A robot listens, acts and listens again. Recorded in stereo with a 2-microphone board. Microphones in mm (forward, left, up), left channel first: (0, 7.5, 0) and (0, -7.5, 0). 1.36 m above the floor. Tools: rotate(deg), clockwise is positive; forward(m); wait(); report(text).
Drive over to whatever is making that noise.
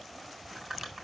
rotate(20)
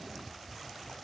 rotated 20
wait()
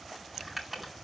forward(1.0)
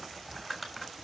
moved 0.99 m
forward(1.0)
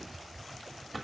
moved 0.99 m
rotate(-10)
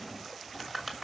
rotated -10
forward(1.0)
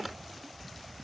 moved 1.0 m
forward(1.0)
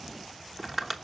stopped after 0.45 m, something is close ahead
report("Arrived at the crumpling, straight ahead.")